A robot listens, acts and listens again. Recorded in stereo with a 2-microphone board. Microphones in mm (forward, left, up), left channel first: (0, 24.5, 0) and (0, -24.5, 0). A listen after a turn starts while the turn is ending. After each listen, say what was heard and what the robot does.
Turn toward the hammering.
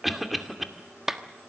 Keep listening.
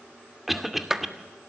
Keep listening.
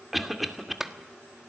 I can't make out hammering to turn to.